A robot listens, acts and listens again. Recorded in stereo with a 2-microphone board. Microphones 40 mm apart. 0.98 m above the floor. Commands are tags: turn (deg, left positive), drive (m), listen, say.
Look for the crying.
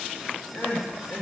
<turn deg="55"/>
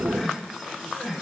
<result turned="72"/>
<turn deg="-15"/>
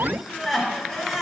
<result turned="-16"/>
<say>Facing the crying, 1 to 2 m away.</say>